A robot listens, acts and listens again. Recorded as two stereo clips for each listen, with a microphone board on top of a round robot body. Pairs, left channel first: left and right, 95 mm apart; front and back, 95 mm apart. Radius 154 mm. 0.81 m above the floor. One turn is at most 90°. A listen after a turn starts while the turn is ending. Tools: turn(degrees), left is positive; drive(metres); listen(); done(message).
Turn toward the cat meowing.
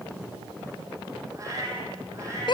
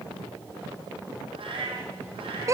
turn(degrees=-90)
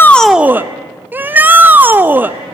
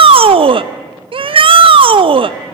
turn(degrees=-60)
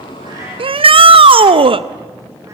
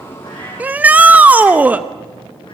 listen()
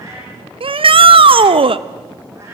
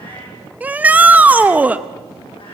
turn(degrees=-30)
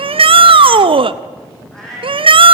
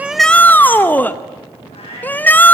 done("Facing the cat meowing.")